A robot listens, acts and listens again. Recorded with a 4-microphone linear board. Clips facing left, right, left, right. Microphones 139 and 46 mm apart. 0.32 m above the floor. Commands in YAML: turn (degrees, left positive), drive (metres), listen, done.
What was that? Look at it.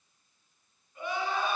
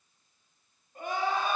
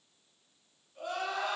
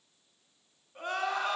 turn: -45
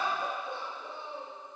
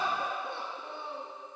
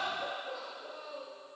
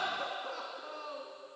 turn: -80
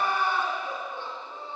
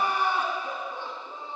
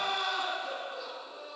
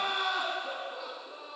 turn: -15
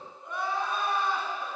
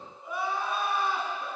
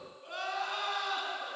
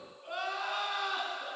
done: "Facing the crying, 2 to 4 m away."